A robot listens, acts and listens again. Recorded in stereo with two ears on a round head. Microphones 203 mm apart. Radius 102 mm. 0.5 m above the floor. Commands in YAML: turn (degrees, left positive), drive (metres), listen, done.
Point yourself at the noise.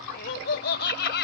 turn: 50
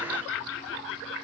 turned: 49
turn: 65
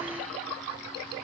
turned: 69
listen: true
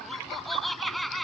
done: "Found it: laughter, straight ahead."